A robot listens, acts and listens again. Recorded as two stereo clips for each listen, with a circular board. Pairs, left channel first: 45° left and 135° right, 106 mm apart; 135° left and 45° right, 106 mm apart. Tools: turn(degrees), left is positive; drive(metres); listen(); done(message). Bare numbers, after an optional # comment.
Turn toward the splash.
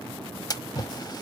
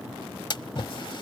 # The splash: 95° left.
turn(95)
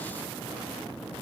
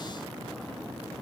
done("I heard a splash from this way, but can't make it out now.")